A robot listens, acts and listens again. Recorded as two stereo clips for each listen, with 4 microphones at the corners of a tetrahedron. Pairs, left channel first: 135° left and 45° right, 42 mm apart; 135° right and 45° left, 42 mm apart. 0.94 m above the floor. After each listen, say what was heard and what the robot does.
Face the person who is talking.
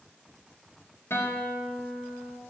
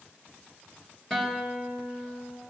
Keep listening.
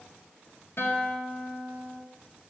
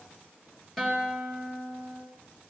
Keep listening.
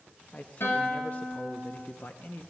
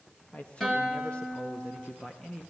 The man speaking: 150° left. Turn 150° left.
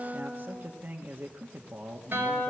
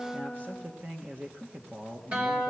Facing the man speaking.